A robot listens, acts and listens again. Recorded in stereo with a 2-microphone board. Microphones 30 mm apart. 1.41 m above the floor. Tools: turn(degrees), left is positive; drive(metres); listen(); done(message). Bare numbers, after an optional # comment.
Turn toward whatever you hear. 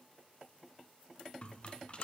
# The rattle: about 40° left or 140° left.
turn(40)
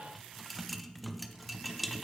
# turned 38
done("Facing the rattle.")